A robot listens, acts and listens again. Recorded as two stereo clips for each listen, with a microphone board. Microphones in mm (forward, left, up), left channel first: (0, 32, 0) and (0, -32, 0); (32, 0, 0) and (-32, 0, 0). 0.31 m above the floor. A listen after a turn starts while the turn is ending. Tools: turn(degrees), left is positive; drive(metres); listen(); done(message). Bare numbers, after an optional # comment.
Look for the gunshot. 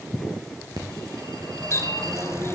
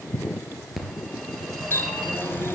listen()
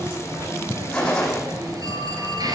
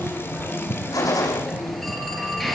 # The gunshot: 15° left.
turn(15)
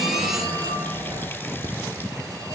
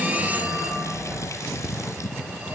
done("Facing where the gunshot came from. I can't hear it now.")